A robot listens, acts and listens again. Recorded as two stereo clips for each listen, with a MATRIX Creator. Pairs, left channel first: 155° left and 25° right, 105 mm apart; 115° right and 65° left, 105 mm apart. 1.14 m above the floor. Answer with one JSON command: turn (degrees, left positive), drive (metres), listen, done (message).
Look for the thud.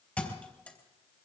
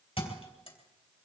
{"turn": -130}
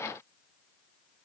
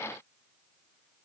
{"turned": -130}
{"done": "Facing where the thud came from. I can't hear it now."}